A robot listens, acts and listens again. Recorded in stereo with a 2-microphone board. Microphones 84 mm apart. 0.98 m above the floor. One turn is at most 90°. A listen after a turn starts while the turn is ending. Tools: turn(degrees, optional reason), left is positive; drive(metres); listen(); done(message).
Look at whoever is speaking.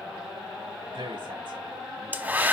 turn(degrees=-90)
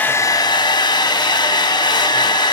listen()
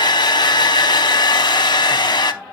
listen()
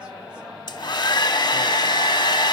done("I heard a man speaking from this way, but can't make it out now.")